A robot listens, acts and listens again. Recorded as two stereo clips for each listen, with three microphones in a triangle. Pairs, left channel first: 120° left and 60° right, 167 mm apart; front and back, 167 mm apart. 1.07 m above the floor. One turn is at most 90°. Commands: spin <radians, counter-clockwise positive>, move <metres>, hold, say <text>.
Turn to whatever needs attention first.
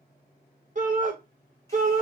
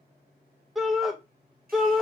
spin -1.57
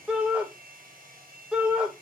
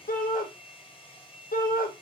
spin 0.44
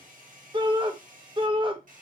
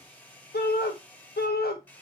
say Facing the shout.